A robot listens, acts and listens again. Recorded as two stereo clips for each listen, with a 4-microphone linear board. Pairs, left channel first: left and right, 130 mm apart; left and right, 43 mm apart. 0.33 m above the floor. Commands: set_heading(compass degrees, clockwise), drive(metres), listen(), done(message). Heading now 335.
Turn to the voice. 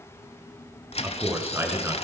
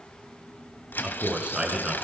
set_heading(355)
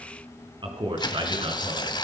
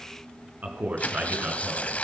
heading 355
set_heading(135)
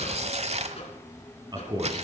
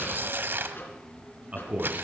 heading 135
set_heading(170)
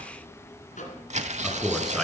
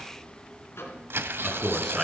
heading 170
done("Found it: a man speaking, straight ahead, 2 to 4 m away.")